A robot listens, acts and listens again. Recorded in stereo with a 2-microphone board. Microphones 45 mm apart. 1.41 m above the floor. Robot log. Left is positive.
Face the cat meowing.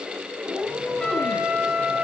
note: The cat meowing: about 15° right or 165° right.
cmd yaw -15
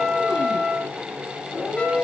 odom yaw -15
note: So it is at 15° left.
cmd yaw +15
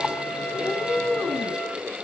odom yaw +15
end: Found it: a cat meowing, straight ahead.